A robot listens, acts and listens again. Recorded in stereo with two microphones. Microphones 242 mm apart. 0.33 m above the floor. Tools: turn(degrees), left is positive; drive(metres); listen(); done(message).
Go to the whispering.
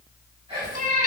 turn(degrees=-20)
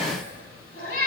turn(degrees=-135)
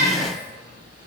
turn(degrees=10)
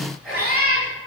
drive(metres=1.0)
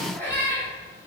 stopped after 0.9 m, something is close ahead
listen()
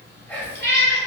turn(degrees=10)
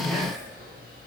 done("I am next to the whispering.")